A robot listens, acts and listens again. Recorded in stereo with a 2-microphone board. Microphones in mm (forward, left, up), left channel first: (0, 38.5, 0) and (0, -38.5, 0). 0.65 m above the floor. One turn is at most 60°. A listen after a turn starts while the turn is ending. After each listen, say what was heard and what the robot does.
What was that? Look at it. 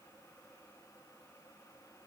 Keep listening.
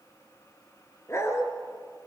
The dog barking: about 35° left or 145° left. Turn 35° left.
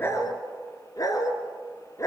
The dog barking: about 40° left or 140° left. Turn 40° left.
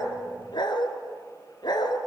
So it is at 110° left. Turn 60° left.
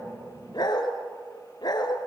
The dog barking is now 65° left. Turn 60° left.
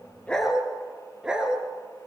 The dog barking is now 10° right. Turn 10° right.
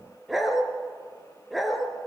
Found it: a dog barking, straight ahead.